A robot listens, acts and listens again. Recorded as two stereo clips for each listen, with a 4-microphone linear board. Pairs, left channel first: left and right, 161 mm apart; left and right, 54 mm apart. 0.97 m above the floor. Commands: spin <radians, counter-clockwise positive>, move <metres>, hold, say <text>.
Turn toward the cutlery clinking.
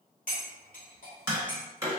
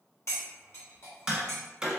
spin 1.05
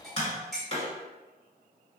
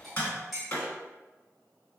say Facing the cutlery clinking, 1 to 2 m away.